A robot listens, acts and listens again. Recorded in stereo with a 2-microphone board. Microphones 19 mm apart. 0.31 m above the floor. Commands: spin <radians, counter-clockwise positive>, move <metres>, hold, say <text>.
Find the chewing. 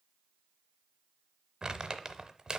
hold
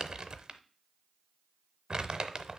hold
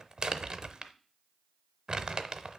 say I can't make out chewing, only crumpling.